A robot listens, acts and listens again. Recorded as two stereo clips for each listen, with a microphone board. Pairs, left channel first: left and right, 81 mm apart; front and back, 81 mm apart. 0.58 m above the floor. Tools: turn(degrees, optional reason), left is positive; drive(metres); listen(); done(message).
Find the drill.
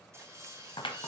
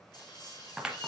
turn(degrees=-35, reason="The drill: 35° right.")
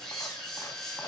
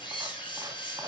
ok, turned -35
done("Found it: a drill, straight ahead.")